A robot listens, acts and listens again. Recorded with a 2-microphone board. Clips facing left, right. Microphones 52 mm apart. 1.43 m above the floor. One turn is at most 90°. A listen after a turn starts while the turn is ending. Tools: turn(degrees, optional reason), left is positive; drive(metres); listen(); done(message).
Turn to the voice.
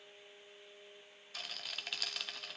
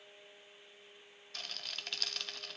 listen()
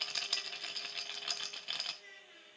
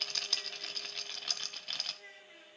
turn(degrees=-25, reason="The child speaking: about 25° right or 155° right.")
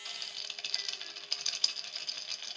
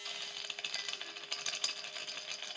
listen()
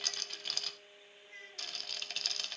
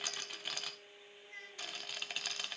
done("Facing the child speaking.")